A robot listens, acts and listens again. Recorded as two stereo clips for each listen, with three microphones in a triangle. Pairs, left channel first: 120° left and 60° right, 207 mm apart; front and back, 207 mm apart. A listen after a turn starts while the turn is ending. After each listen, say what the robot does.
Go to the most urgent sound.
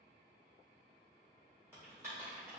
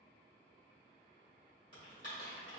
Keep listening.
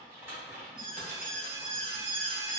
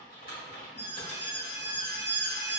Turn 15° right.
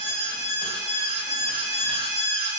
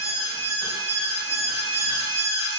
Drive 1.0 m forward.
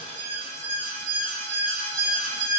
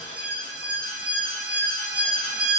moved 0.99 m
Drive 1.0 m forward.
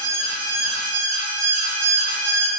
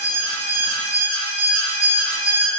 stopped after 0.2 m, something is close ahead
Turn 10° left.
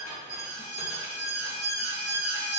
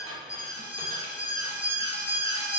Arrived at the alarm, straight ahead.